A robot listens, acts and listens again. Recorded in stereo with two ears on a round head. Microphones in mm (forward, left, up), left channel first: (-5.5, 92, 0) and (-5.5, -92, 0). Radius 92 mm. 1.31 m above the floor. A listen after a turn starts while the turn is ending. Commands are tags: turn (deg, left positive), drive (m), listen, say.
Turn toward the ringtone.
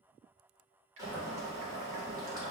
<listen/>
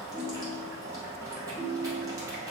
<turn deg="-50"/>
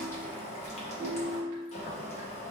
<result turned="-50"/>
<say>Found it: a ringtone, straight ahead.</say>